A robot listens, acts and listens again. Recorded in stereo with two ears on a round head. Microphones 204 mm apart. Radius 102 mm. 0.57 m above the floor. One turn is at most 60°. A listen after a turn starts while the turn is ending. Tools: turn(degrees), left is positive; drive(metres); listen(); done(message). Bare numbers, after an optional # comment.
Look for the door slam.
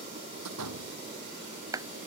turn(-60)
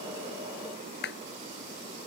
# Nothing new. It was at 30° right.
turn(-30)
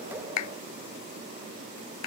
done("Facing where the door slam came from. I can't hear it now.")